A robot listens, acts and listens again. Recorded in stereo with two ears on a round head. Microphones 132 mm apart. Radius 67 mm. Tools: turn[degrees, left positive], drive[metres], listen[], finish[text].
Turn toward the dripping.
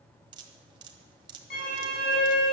Thought: The dripping: about 35° right or 145° right.
Action: turn[-35]
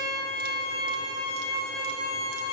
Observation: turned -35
Action: listen[]
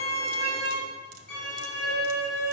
Action: listen[]
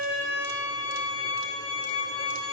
Action: finish[I heard dripping, but can't make it out now. It was about straight ahead or 110° right.]